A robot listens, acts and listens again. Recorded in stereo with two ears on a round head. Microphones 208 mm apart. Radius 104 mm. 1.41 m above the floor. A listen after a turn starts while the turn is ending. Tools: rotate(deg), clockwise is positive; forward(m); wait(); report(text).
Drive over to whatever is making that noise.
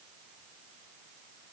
wait()
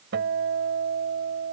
rotate(50)
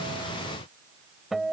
forward(1.0)
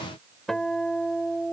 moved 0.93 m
forward(1.0)
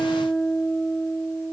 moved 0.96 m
forward(1.0)
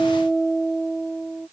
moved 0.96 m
forward(1.0)
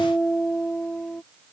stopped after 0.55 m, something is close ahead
report("Arrived at the guitar, straight ahead.")